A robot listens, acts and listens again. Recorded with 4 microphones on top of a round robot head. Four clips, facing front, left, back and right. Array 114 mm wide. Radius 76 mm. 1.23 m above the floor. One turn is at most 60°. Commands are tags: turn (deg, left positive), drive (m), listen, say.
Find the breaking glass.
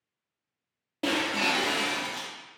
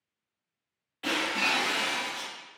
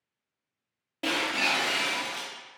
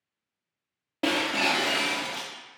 <turn deg="-60"/>
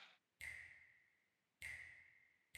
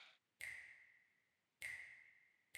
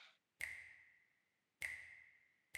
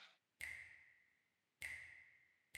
<turn deg="-15"/>
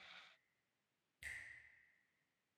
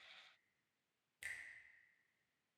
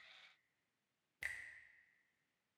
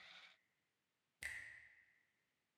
<say>Facing where the breaking glass came from. I can't hear it now.</say>